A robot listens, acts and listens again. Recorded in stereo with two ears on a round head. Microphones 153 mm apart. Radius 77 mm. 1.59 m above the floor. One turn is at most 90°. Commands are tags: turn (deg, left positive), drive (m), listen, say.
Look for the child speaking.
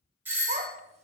<turn deg="-40"/>
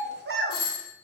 <turn deg="-90"/>
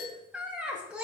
<turn deg="-10"/>
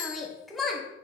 <say>Facing the child speaking, under 1 m away.</say>